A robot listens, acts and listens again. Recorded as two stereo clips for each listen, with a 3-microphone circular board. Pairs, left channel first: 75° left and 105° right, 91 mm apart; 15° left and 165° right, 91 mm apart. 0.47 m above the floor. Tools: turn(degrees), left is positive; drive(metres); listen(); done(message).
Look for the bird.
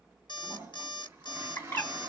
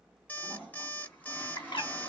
turn(degrees=10)
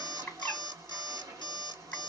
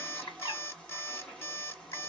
done("Facing the bird, 1 to 2 m away.")